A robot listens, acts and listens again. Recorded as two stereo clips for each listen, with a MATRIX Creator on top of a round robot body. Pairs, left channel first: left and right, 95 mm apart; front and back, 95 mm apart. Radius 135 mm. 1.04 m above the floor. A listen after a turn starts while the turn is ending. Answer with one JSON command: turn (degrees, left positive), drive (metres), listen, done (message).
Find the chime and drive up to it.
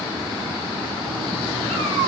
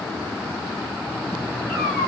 {"listen": true}
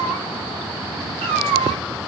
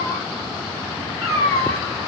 {"listen": true}
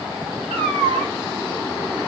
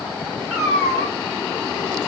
{"done": "I can't make out a chime, only a cat meowing."}